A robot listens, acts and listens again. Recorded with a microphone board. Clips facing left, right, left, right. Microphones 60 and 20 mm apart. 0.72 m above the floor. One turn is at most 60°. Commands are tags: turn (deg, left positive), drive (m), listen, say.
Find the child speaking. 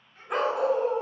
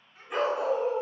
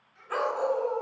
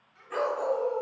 <turn deg="-30"/>
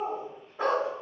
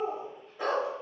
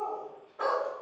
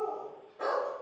<listen/>
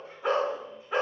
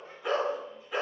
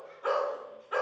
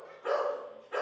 <listen/>
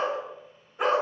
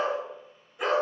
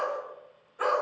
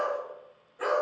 <say>I heard a child speaking, but can't make it out now. It was about 25° left or 145° right.</say>